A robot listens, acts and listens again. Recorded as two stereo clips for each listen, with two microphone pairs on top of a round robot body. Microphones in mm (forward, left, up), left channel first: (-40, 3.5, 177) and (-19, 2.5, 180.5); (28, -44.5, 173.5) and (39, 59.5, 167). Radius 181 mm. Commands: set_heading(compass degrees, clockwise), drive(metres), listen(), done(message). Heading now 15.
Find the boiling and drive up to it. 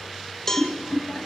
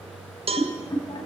set_heading(160)
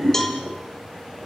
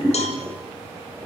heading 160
drive(1.0)
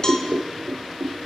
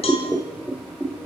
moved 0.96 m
drive(1.0)
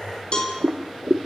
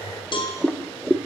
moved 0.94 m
set_heading(170)
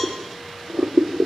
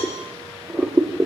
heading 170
drive(1.0)
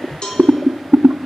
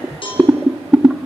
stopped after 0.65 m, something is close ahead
done("Arrived at the boiling, straight ahead.")